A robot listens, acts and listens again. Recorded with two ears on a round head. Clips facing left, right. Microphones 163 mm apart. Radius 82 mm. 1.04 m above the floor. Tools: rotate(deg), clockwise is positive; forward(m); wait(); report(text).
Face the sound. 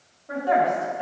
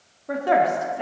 rotate(90)
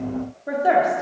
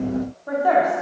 rotate(-30)
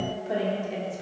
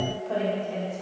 rotate(-20)
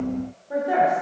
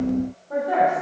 rotate(-15)
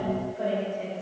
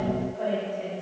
report("Found it: a woman speaking, straight ahead.")